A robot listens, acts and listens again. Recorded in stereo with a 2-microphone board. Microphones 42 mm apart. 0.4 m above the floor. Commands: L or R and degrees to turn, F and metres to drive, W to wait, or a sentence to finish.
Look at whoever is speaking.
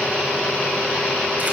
W
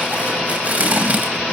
W
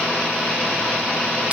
I can't make out anyone speaking, only tape being pulled.